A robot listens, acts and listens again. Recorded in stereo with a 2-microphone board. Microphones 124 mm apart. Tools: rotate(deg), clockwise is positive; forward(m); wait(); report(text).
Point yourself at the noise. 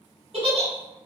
rotate(50)
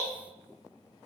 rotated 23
wait()
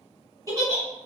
rotate(35)
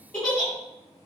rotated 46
rotate(-10)
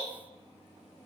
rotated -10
wait()
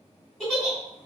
report("Found it: a giggle, straight ahead.")